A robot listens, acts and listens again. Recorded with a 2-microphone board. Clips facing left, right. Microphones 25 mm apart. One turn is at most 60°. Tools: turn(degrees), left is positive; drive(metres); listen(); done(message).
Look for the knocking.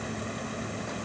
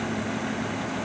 listen()
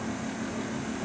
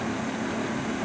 listen()
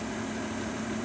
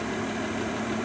done("I can't make out knocking.")